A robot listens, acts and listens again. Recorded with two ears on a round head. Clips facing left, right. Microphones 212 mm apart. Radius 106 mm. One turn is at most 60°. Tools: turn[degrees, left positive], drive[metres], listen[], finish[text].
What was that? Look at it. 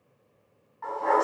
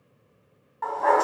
Thought: The dog barking: about 65° right or 115° right.
Action: turn[-60]
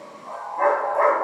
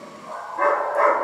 Thought: So it is at 20° right.
Action: turn[-20]
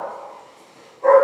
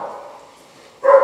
Thought: The dog barking is now 20° right.
Action: turn[-20]
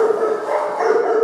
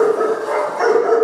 Thought: The dog barking is now 15° right.
Action: turn[-15]
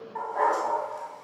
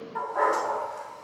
Action: finish[Found it: a dog barking, straight ahead.]